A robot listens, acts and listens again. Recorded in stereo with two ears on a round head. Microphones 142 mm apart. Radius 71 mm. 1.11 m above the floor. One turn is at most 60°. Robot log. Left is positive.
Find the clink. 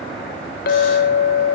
note: The clink: about 60° left or 120° left.
cmd yaw +60
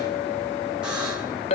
note: So it is at 45° left.
cmd yaw +45
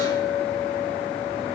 end: Found it: a clink, straight ahead.